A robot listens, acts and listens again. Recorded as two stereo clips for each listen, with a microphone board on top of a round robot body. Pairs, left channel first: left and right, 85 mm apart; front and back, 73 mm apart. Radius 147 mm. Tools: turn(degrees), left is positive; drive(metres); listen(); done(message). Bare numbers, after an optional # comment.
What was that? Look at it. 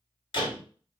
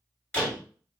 # The door slam: 75° left.
turn(75)
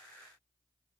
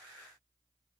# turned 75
done("I heard a door slam from this way, but can't make it out now.")